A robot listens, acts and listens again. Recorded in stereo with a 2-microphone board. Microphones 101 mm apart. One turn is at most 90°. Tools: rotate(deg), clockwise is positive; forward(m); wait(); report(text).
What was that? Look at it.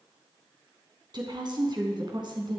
rotate(50)
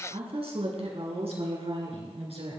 rotate(75)
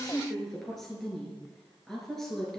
report("Facing the woman speaking, over 4 m away.")